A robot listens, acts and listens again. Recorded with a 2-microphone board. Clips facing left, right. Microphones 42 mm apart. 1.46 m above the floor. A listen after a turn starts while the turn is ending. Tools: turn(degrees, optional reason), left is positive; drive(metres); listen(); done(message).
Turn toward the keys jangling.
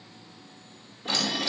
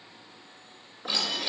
turn(degrees=-20, reason="The keys jangling: about 20° right or 160° right.")
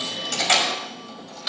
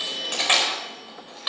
turn(degrees=-30, reason="The keys jangling: about 30° right or 150° right.")
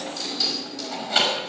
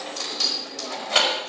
turn(degrees=-120, reason="So it is at 120° right.")
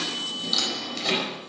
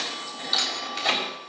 turn(degrees=-15, reason="The keys jangling is now 15° right.")
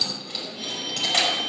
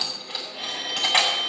turn(degrees=-15, reason="The keys jangling is now 15° right.")
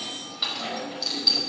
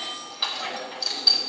done("Found it: keys jangling, straight ahead.")